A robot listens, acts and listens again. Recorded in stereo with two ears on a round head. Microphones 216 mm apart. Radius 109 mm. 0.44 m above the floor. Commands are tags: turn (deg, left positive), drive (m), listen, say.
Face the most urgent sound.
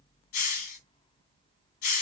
<listen/>
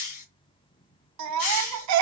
<turn deg="-90"/>
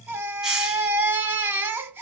<turn deg="-10"/>
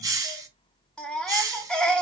<say>Found it: a baby crying, straight ahead.</say>